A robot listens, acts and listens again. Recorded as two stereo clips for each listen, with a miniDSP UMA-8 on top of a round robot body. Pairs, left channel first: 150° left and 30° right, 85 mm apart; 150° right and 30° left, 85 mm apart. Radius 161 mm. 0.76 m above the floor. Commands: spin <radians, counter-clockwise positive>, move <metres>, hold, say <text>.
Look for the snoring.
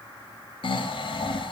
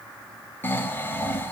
spin 2.53
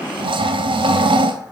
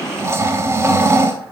spin -0.44
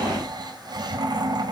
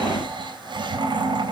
say Found it: snoring, straight ahead.